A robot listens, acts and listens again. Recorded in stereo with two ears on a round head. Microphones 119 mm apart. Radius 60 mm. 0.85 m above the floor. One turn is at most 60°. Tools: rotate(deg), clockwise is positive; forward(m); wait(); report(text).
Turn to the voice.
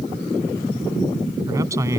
rotate(20)
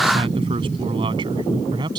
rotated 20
rotate(35)
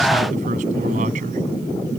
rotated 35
rotate(60)
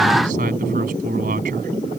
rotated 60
rotate(60)
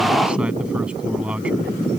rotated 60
rotate(10)
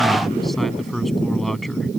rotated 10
report("Found it: a man speaking, straight ahead.")